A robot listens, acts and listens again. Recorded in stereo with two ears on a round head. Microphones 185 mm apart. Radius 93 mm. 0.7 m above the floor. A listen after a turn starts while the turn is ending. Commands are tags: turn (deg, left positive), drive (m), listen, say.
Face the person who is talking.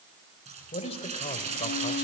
<turn deg="30"/>
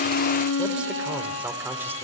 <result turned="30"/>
<turn deg="-10"/>
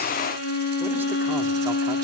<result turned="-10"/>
<listen/>
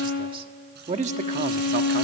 <turn deg="-35"/>
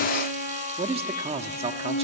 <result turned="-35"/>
<turn deg="-30"/>
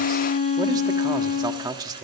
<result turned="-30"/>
<turn deg="-20"/>
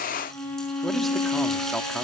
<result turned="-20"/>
<listen/>
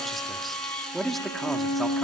<say>Facing the man speaking, 1 to 2 m away.</say>